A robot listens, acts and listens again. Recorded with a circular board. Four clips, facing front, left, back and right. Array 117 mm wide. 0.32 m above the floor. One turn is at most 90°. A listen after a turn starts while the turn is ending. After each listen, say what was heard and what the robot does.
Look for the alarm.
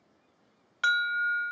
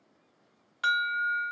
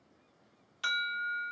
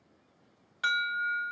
Found it: an alarm, straight ahead, 1 to 2 m away.